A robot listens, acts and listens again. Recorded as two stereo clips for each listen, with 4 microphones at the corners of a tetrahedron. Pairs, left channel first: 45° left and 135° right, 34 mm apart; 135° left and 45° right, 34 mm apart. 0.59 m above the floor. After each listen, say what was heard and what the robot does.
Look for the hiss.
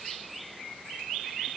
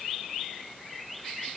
Keep listening.
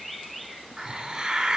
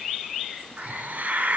The hiss: 70° right. Turn 70° right.
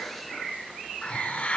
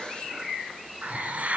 The hiss is now 10° right. Turn 10° right.
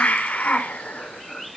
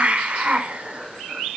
Facing the hiss.